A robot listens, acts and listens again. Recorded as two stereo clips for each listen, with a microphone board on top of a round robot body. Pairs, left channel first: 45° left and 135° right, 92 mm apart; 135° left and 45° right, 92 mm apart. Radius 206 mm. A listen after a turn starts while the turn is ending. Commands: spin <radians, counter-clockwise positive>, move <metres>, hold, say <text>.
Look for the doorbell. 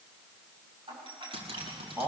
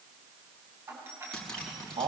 spin -1.92
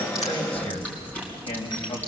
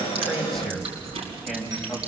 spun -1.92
hold
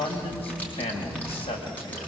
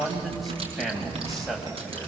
hold
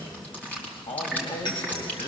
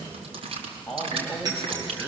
say Found it: a doorbell, straight ahead.